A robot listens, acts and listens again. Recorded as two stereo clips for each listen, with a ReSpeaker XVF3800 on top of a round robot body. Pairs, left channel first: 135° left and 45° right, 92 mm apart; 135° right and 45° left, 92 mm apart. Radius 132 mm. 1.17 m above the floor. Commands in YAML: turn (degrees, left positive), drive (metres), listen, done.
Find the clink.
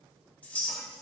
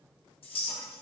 turn: -150
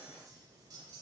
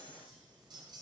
listen: true
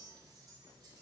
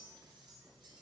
listen: true
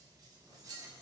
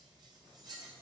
done: "Facing the clink, 1 to 2 m away."